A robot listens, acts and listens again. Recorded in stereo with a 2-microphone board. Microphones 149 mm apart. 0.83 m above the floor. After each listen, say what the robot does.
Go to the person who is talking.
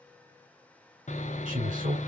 Turn 55° right.
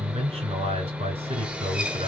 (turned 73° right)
Turn 50° right.
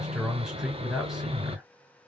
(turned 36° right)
Turn 10° right.
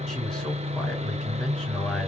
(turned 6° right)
Drive 1.0 m forward.
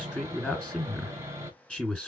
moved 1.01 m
Drive 1.0 m forward.
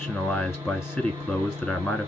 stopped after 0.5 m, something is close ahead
I am next to the man speaking.